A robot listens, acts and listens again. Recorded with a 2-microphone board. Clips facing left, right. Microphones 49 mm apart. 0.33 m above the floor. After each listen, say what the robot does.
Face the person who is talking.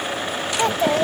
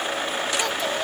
Turn 30° left.
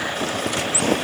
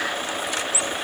Keep listening.
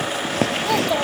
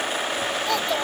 Turn 10° left.
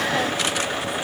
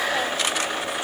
Keep listening.
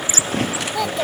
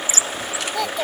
Found it: a child speaking, straight ahead.